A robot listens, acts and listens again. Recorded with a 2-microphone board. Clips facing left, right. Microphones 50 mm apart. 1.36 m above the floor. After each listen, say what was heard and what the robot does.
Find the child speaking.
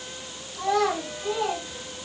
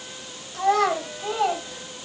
The child speaking: about 50° right or 130° right. Turn 50° right.
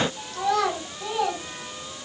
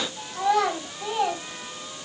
So it is at 15° right. Turn 15° right.
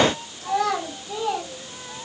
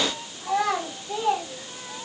The child speaking is now 10° right. Turn 10° right.
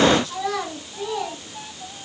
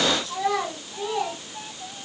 Facing the child speaking, over 4 m away.